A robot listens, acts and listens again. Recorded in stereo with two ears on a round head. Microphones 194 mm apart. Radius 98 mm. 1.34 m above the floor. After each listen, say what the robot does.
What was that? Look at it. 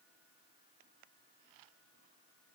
Keep listening.
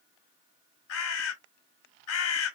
Turn 65° left.
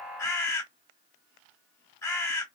Turn 15° left.
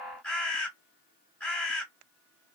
Found it: a bird, straight ahead, under 1 m away.